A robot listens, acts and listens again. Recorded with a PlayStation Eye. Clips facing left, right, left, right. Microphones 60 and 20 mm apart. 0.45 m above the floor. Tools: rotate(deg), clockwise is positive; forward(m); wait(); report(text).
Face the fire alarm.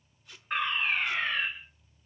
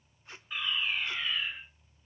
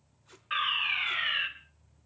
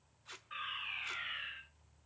rotate(-55)
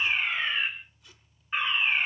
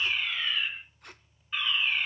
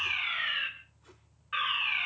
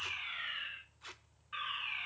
rotate(-40)
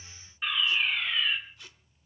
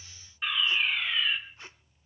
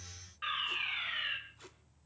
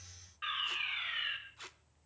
report("Found it: a fire alarm, straight ahead.")